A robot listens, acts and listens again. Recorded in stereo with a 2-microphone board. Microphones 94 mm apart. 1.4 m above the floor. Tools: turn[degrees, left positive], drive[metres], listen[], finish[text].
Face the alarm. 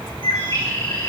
Action: listen[]
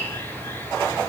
Action: listen[]
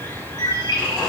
Action: finish[I can't make out an alarm to turn to.]